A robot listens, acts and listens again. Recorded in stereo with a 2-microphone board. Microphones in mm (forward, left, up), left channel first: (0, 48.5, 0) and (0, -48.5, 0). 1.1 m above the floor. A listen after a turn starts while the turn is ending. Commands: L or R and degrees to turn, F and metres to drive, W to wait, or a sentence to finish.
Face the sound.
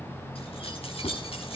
L90
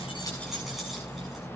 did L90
W
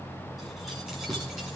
Found it: keys jangling, straight ahead, over 4 m away.